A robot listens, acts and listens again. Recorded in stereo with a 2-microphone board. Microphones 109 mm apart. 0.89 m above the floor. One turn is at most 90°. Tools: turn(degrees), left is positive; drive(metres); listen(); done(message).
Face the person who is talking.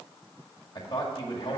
turn(degrees=45)
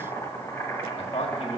turn(degrees=90)
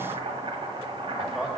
done("Found it: a man speaking, straight ahead, 1 to 2 m away.")